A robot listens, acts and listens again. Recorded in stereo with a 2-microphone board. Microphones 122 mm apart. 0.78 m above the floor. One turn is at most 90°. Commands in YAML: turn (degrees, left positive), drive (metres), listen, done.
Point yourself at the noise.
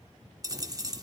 turn: -30
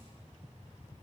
listen: true
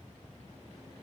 done: "I heard a dropped coin, but can't make it out now. It was about straight ahead or 120° right."